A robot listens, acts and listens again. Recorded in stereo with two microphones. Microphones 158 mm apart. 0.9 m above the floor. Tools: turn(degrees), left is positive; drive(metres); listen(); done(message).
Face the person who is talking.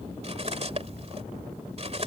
listen()
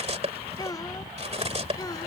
turn(degrees=25)
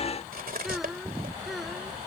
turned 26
done("Facing the child speaking.")